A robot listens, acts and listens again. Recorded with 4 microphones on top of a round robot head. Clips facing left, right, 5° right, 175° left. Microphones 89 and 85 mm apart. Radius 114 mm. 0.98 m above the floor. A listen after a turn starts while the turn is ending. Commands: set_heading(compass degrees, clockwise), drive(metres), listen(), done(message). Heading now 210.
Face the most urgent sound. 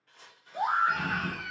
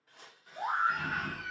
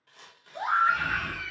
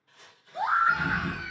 set_heading(105)
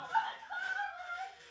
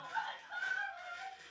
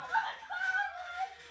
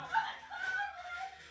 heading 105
set_heading(75)
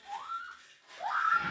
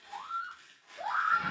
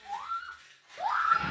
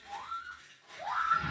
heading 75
done("Found it: a scream, straight ahead.")